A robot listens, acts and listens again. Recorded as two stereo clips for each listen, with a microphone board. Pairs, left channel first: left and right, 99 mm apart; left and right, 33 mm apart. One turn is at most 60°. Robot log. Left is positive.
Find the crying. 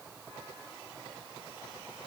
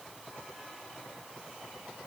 cmd idle
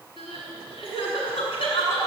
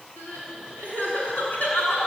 note: The crying: about 65° left or 115° left.
cmd yaw +60
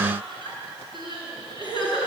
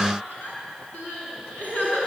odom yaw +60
note: So it is at 55° left.
cmd yaw +55
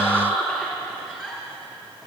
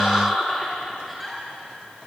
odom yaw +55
note: The crying is now 10° left.
cmd yaw +10
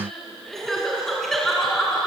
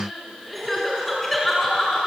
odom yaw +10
end: Facing the crying.